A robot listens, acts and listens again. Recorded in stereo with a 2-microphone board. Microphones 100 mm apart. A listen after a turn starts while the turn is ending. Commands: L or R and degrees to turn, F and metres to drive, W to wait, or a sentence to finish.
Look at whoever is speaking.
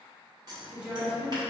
R30
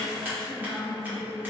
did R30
L15
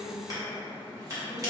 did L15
W
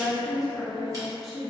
Facing the woman speaking.